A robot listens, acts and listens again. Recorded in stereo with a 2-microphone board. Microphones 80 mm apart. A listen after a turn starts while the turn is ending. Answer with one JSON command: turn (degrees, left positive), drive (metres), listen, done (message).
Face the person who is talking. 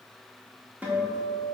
{"listen": true}
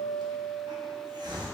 {"listen": true}
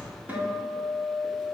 {"done": "I can't make out anyone speaking to turn to."}